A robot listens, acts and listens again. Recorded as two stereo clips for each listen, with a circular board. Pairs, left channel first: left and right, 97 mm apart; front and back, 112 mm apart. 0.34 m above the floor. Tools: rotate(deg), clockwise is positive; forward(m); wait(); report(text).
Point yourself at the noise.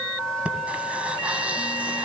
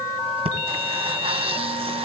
rotate(165)
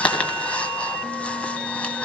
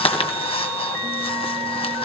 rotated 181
rotate(-15)
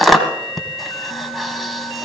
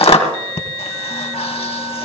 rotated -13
report("Found it: breathing, straight ahead.")